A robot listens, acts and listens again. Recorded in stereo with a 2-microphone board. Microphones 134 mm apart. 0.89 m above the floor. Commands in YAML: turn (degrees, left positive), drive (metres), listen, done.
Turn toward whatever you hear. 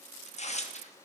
turn: 55
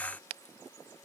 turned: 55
listen: true
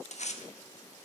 turn: 65
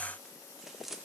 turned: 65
done: "Found it: tearing paper, straight ahead, 1 to 2 m away."